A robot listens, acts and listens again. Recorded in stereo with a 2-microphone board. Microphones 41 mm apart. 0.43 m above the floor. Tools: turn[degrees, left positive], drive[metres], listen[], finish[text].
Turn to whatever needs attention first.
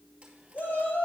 Thought: The shout: about 60° left or 120° left.
Action: turn[60]
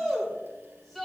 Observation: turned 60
Thought: So it is at 10° left.
Action: turn[10]
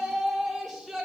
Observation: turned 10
Action: finish[Found it: a shout, straight ahead, 2 to 4 m away.]